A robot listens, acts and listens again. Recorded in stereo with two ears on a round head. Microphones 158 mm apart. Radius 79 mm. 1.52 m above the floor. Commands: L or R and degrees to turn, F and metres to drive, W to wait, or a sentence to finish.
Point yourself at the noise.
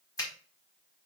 L20
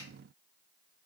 W
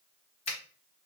L140
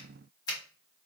L20
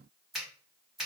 Facing the finger snap, 1 to 2 m away.